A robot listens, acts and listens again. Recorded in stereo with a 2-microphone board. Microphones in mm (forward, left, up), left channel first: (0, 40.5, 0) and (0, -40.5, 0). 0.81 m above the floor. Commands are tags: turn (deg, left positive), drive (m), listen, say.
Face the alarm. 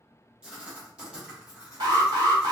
<turn deg="-75"/>
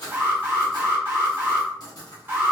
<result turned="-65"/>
<turn deg="-30"/>
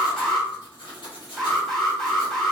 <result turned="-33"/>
<say>Found it: an alarm, straight ahead.</say>